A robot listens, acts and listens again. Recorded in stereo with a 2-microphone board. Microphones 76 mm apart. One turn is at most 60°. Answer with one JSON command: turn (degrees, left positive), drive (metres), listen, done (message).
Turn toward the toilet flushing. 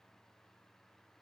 {"listen": true}
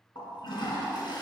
{"turn": 60}
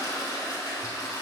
{"turn": 55}
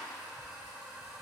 {"turn": -10}
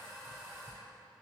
{"done": "Found it: a toilet flushing, straight ahead, 2 to 4 m away."}